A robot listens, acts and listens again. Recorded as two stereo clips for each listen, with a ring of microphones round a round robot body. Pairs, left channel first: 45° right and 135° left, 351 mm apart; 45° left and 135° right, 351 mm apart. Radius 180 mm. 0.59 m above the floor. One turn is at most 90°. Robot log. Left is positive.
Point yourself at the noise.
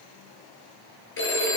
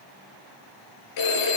note: The phone ringing: 15° left.
cmd yaw +15
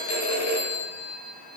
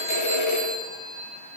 end: Found it: a phone ringing, straight ahead, over 4 m away.